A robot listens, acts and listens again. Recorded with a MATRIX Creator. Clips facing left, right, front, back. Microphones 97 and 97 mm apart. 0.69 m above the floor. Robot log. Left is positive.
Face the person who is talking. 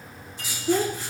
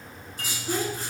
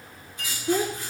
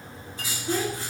note: The child speaking: 65° left.
cmd yaw +65
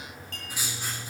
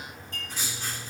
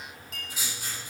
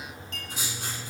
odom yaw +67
cmd idle
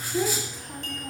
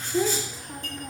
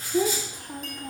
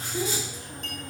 end: Found it: a child speaking, straight ahead.